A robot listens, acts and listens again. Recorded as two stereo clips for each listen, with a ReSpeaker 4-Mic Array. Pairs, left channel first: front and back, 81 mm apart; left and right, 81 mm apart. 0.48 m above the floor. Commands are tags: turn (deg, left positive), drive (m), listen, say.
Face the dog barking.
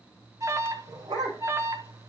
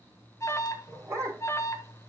<turn deg="-145"/>
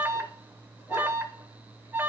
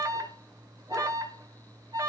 <listen/>
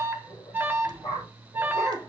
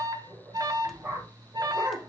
<turn deg="-15"/>
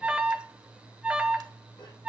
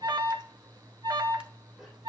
<listen/>
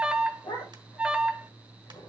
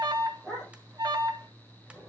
<say>Found it: a dog barking, straight ahead.</say>